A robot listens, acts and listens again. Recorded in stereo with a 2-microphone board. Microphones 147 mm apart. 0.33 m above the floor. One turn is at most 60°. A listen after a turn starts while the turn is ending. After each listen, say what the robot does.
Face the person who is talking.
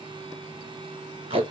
Keep listening.
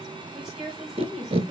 Turn 30° left.
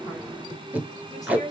Turn 60° left.
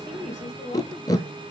Turn 60° left.
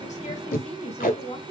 Turn 60° left.
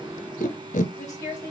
Turn 25° left.
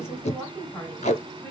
Turn 10° left.
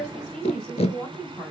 Found it: a woman speaking, straight ahead.